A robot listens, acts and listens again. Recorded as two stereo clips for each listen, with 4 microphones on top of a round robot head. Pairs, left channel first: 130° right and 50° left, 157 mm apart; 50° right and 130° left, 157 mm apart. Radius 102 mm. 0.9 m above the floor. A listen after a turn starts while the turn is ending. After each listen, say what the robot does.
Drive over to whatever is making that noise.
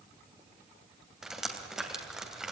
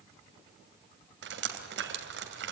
Turn 135° left.
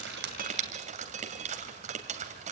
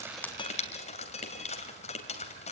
Drive 1.0 m forward.
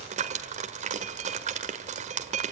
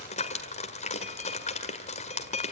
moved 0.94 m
Drive 1.0 m forward.
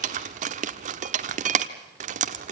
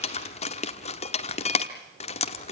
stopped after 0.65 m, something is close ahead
I am next to the dripping.